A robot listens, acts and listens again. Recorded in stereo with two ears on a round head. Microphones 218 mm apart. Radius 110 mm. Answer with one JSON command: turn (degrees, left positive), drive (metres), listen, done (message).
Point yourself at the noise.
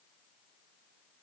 {"listen": true}
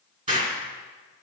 {"turn": -30}
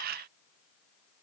{"listen": true}
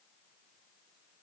{"done": "I heard an explosion, but can't make it out now. It was about straight ahead or 120° right."}